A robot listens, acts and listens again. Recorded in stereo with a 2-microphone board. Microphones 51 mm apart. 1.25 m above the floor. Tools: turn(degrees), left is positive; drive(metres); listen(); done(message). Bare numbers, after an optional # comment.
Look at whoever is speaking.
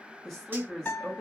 turn(30)
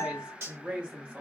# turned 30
# So it is at 25° right.
turn(-25)
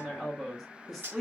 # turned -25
done("Facing the woman speaking, 1 to 2 m away.")